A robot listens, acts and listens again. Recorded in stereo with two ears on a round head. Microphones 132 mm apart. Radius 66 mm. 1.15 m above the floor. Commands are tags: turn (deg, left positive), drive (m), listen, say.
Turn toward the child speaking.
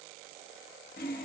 <listen/>
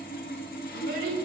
<turn deg="-70"/>
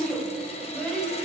<say>Found it: a child speaking, straight ahead, over 4 m away.</say>